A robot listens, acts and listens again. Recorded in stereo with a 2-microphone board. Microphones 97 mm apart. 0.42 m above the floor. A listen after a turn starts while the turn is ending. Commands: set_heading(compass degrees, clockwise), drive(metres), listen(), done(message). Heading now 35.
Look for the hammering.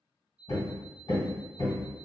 set_heading(335)
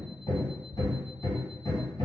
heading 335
set_heading(285)
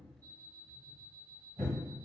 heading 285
set_heading(295)
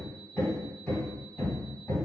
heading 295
done("Found it: hammering, straight ahead.")